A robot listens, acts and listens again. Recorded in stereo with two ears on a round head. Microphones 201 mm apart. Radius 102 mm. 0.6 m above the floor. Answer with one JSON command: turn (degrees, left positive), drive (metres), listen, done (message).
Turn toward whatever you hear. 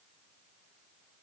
{"listen": true}
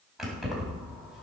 {"turn": -30}
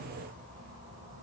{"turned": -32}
{"turn": -140}
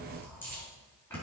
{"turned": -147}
{"turn": 10}
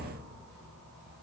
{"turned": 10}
{"done": "Facing the keys jangling, over 4 m away."}